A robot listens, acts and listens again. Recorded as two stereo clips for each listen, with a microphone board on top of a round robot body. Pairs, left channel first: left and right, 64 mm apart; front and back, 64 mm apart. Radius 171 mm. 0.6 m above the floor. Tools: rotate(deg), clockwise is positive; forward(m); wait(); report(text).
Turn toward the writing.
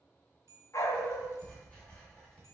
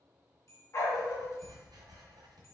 rotate(-165)
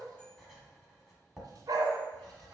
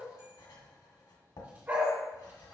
report("Facing the writing.")